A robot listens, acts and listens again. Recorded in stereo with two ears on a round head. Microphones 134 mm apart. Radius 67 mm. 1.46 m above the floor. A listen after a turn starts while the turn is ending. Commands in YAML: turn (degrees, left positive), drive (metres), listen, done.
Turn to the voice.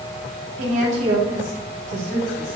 turn: -55
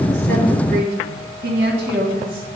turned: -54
turn: -65
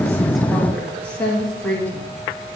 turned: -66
turn: 10
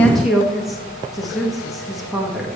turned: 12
done: "Facing the woman speaking, 1 to 2 m away."